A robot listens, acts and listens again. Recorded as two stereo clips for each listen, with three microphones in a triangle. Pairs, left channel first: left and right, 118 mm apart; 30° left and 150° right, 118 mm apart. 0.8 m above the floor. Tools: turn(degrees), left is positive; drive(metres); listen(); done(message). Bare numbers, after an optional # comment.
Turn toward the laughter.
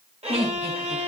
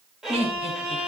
# The laughter: 115° right.
turn(-115)
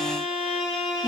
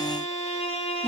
listen()
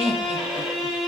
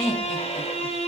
# The laughter is now 55° right.
turn(-55)
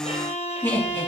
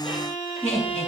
# The laughter is now 20° left.
turn(20)
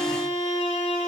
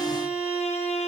listen()
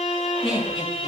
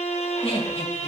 done("Facing the laughter.")